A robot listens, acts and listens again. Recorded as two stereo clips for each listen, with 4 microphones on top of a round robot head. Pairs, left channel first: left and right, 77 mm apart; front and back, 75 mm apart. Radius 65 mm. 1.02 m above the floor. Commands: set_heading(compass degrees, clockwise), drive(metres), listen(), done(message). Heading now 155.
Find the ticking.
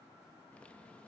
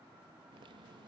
listen()
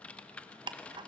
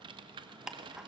set_heading(255)
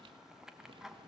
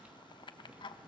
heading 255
done("Facing the ticking.")